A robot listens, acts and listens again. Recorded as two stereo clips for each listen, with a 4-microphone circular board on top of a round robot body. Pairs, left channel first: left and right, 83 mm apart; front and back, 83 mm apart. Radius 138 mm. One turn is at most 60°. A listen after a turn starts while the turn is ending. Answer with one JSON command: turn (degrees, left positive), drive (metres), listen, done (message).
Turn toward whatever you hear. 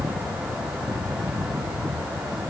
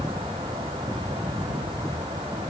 {"listen": true}
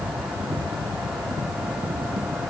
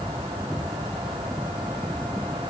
{"listen": true}
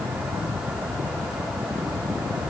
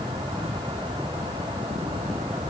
{"done": "I can't make out anything to turn to."}